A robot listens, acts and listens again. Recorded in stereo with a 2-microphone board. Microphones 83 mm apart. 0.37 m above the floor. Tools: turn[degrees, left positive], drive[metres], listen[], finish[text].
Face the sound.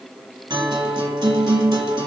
Thought: The guitar: about 70° right or 110° right.
Action: turn[-70]
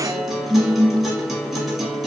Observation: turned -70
Action: finish[Found it: a guitar, straight ahead, 1 to 2 m away.]